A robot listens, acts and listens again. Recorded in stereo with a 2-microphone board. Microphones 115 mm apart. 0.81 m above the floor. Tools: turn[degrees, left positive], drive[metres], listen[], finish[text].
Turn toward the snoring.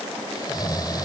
Thought: The snoring: about 35° left or 145° left.
Action: turn[35]
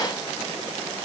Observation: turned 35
Action: listen[]
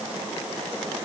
Action: listen[]
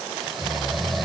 Action: finish[Facing the snoring.]